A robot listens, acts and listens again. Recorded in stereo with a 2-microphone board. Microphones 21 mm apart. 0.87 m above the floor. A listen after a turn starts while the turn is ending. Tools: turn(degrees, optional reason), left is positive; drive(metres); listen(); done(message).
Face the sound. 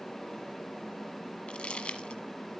turn(degrees=65, reason="The crumpling: about 65° left or 115° left.")
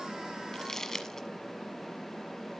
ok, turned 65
turn(degrees=25, reason="So it is at 25° left.")
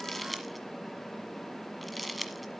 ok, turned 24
done("Found it: crumpling, straight ahead.")